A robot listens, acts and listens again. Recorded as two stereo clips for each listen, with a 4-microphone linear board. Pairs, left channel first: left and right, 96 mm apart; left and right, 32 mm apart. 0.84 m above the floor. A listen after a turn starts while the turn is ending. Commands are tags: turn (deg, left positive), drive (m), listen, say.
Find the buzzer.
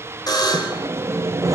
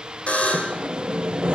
<turn deg="45"/>
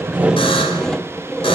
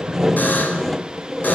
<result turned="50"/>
<listen/>
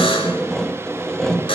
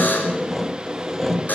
<turn deg="85"/>
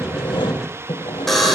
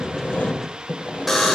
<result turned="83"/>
<say>Found it: a buzzer, straight ahead, over 4 m away.</say>